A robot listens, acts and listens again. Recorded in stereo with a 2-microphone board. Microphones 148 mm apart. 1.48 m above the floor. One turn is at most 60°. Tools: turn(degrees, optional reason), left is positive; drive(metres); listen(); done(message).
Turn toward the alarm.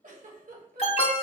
turn(degrees=40, reason="The alarm: about 40° left or 140° left.")
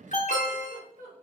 turn(degrees=60, reason="So it is at 90° left.")
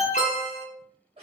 turn(degrees=60, reason="The alarm is now 65° left.")
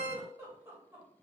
turn(degrees=40, reason="The alarm is now 40° left.")
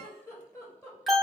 done("Facing the alarm, under 1 m away.")